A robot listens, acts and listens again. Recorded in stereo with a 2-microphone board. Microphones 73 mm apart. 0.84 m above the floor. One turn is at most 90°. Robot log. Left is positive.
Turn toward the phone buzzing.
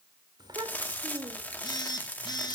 cmd yaw +90
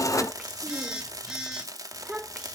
note: So it is at 10° right.
cmd yaw -10
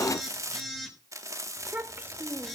end: Found it: a phone buzzing, straight ahead.